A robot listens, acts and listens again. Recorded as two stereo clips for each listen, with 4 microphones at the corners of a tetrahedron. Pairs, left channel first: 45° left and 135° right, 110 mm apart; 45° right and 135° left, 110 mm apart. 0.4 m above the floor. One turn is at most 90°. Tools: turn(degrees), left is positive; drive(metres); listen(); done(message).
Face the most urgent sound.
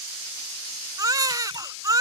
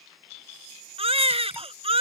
turn(degrees=90)
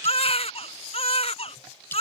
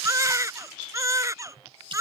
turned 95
turn(degrees=75)
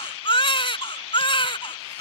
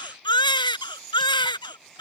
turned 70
done("Facing the baby crying.")